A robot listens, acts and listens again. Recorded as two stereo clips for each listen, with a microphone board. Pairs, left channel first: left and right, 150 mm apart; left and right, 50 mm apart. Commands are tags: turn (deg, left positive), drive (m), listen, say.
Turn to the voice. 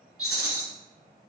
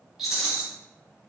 <listen/>
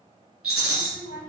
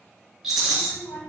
<turn deg="60"/>
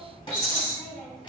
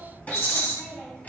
<turn deg="40"/>
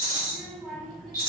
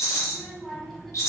<turn deg="10"/>
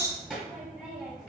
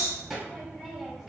<say>Found it: a child speaking, straight ahead, 1 to 2 m away.</say>